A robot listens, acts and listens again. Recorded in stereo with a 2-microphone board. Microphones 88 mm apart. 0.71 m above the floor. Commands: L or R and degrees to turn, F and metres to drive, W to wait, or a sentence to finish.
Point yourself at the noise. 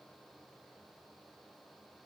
W
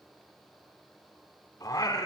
L50
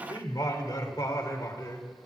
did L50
L50
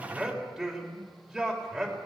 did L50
Facing the singing.